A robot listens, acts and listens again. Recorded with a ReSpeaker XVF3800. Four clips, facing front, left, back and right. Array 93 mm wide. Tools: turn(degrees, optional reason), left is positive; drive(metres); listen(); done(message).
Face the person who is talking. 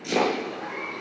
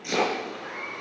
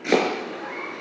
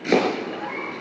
listen()
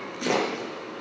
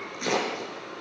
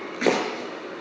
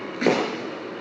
listen()
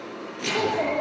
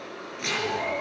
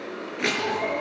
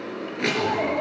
turn(degrees=-25, reason="The child speaking: 25° right.")
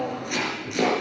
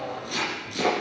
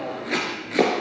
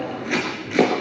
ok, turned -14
turn(degrees=-15, reason="The child speaking is now 15° right.")
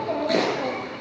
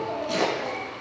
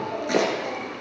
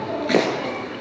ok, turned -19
done("Facing the child speaking.")